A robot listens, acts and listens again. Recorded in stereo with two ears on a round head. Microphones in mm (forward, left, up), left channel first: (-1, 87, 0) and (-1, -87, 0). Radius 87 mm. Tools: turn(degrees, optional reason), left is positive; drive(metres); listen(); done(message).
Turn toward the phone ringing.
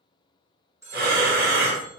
turn(degrees=-15, reason="The phone ringing: about 15° right or 165° right.")
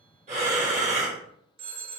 turn(degrees=-150, reason="So it is at 150° right.")
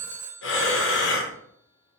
done("Facing the phone ringing, under 1 m away.")